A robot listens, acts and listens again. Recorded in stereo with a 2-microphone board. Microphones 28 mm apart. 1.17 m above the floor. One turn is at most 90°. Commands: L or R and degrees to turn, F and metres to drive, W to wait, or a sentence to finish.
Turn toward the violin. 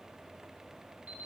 W
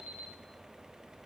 W
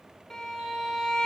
L30
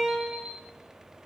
R15
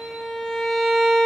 Found it: a violin, straight ahead.